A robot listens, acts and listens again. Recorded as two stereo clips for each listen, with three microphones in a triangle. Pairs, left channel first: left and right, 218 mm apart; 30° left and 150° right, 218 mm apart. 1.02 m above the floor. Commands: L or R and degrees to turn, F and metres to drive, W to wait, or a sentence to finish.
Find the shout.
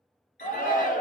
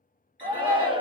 L145
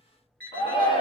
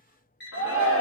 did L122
L25
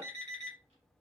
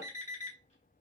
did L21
W
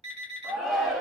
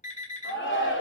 Facing the shout, 1 to 2 m away.